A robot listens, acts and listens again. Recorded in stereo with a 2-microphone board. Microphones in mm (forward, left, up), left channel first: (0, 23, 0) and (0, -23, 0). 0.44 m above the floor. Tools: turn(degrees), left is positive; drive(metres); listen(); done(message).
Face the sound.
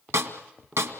turn(degrees=-75)
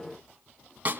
turn(degrees=-35)
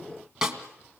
turn(degrees=-10)
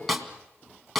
done("Found it: a snare drum, straight ahead.")